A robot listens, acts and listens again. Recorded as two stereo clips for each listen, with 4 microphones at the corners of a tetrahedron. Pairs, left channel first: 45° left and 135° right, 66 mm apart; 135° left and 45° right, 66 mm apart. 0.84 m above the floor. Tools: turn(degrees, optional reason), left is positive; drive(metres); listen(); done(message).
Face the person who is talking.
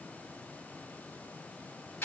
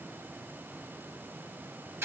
listen()
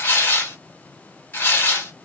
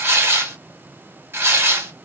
listen()
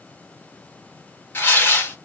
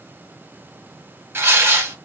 done("I can't make out anyone speaking, only tearing paper.")